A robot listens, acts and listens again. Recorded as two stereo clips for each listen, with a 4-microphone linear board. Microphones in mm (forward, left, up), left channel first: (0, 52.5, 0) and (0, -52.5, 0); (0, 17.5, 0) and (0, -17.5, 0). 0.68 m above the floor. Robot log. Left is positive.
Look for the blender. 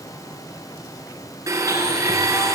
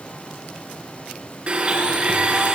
note: The blender: about 35° right or 145° right.
cmd yaw -35
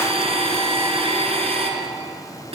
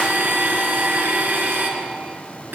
note: So it is at 110° right.
cmd yaw -110
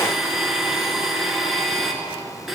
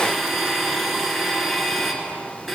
end: Found it: a blender, straight ahead.